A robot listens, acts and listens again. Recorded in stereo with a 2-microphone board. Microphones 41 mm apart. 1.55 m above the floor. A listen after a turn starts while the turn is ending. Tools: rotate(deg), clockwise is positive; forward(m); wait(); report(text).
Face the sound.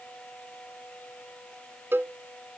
rotate(70)
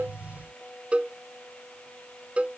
rotate(30)
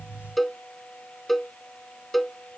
report("Facing the cowbell.")